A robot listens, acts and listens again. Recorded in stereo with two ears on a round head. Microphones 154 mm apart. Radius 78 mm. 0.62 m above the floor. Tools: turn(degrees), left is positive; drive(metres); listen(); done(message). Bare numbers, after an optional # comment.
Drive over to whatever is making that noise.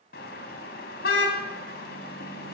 # The car horn: about 60° left or 120° left.
turn(60)
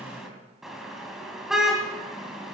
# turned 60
drive(1.0)
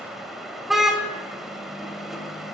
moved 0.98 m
drive(1.0)
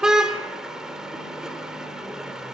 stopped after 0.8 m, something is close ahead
done("I am next to the car horn.")